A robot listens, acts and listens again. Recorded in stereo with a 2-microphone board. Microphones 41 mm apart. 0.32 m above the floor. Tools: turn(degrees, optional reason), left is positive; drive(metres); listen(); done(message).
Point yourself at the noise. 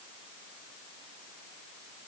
listen()
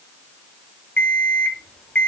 turn(degrees=30, reason="The alarm clock: about 30° left or 150° left.")
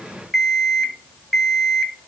done("Found it: an alarm clock, straight ahead.")